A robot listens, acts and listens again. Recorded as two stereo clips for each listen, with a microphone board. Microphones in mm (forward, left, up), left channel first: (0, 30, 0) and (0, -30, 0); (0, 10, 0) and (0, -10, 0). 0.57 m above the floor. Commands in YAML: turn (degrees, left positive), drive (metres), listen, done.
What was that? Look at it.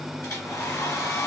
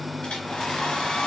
turn: 90
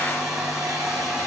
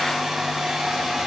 done: "Facing the hair dryer, 2 to 4 m away."